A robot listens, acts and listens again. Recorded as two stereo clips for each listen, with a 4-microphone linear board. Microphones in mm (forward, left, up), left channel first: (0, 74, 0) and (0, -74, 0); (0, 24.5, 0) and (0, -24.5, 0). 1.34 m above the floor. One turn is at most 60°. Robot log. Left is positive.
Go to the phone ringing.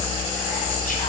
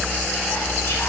cmd idle
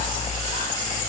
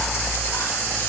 cmd idle
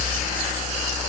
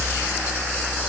end: I can't make out a phone ringing to turn to.